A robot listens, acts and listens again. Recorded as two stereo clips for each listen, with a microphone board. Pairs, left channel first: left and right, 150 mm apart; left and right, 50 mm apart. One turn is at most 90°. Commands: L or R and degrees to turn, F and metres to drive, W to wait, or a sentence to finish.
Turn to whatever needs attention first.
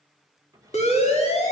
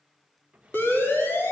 L45
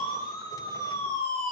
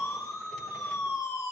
L90
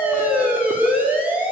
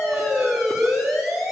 R10
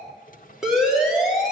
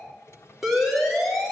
Found it: a siren, straight ahead.